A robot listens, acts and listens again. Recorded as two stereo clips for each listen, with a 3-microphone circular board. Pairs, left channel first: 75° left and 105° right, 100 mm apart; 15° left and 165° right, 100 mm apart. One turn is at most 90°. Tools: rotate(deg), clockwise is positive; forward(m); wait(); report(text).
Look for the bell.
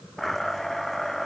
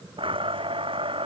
wait()
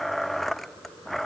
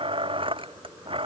wait()
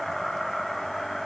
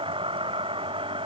report("I can't make out a bell, only a blender.")